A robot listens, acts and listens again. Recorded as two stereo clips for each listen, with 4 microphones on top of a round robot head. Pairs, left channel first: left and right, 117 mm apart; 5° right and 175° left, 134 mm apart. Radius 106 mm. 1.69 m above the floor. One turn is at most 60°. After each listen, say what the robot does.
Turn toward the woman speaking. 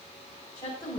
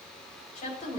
Turn 25° left.
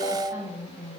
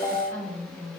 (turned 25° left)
Turn 20° right.
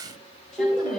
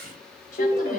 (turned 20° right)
Keep listening.
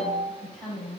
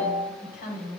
Found it: a woman speaking, straight ahead.